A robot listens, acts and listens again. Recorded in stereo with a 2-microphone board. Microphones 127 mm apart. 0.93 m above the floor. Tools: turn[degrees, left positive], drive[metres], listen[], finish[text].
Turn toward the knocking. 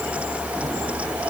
Action: listen[]
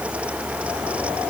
Action: listen[]
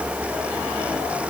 Action: finish[I can't make out knocking.]